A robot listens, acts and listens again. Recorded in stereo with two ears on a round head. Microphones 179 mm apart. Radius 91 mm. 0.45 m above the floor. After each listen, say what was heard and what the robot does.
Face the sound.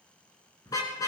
The car horn: about 20° left or 160° left. Turn 20° left.
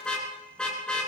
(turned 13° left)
Facing the car horn, 2 to 4 m away.